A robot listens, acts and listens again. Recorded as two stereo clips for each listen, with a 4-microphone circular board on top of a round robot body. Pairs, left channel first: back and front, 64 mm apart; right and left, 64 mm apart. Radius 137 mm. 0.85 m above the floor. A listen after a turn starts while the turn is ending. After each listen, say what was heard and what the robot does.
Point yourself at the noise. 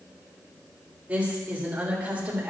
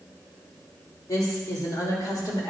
The woman speaking: 70° right. Turn 70° right.
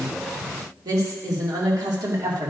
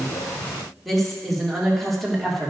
Found it: a woman speaking, straight ahead, 2 to 4 m away.